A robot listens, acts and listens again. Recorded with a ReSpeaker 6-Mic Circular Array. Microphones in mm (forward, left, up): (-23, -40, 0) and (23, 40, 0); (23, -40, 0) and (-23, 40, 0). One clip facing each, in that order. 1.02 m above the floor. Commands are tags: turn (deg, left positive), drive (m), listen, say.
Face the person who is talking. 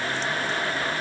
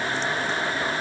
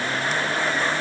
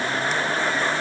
<listen/>
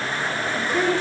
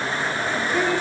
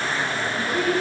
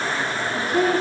<turn deg="145"/>
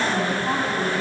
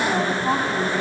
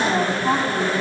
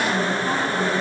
<turn deg="-20"/>
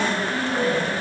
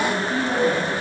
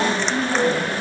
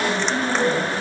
<say>Facing the woman speaking, over 4 m away.</say>